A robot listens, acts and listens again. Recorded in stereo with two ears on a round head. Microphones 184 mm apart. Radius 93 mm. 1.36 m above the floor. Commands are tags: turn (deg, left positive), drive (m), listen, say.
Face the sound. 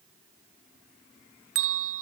<turn deg="-70"/>
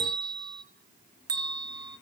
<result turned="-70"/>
<turn deg="-20"/>
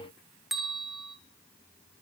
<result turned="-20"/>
<say>Facing the bell.</say>